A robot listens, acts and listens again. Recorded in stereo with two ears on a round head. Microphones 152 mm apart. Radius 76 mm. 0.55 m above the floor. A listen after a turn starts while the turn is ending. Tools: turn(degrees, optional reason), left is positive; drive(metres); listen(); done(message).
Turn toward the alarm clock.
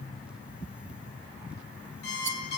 turn(degrees=65, reason="The alarm clock: about 65° left or 115° left.")
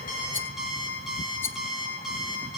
done("Facing the alarm clock, over 4 m away.")